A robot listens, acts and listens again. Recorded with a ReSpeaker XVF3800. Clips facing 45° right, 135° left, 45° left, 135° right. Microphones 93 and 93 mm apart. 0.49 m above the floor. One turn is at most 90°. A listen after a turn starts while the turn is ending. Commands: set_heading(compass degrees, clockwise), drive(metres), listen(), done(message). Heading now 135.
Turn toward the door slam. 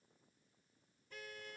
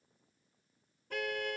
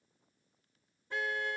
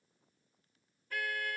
listen()
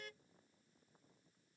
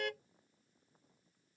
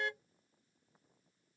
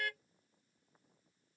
listen()
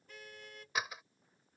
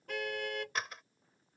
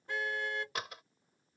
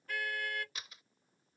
set_heading(95)
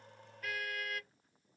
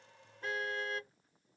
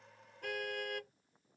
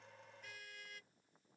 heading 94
done("I heard a door slam from this way, but can't make it out now.")